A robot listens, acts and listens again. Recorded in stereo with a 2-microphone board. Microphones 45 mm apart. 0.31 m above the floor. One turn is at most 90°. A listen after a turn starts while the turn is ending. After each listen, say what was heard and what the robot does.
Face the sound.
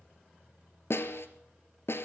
The snare drum: about 65° left or 115° left. Turn 65° left.
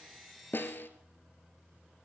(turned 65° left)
So it is at 50° left. Turn 50° left.
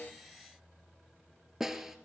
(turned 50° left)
The snare drum is now 10° right. Turn 10° right.
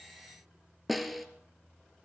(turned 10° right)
Found it: a snare drum, straight ahead, 1 to 2 m away.